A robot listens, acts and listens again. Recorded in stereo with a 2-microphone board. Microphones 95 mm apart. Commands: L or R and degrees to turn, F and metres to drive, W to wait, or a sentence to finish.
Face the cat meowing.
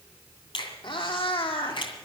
L65
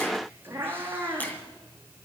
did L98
R20
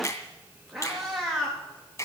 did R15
Facing the cat meowing, over 4 m away.